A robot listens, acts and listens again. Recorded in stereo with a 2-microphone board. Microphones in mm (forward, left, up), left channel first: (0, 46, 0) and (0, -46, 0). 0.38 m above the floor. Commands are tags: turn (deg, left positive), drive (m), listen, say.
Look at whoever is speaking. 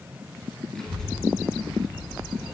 <turn deg="30"/>
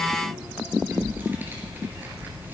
<turn deg="-20"/>
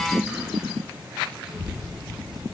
<say>Found it: a child speaking, straight ahead.</say>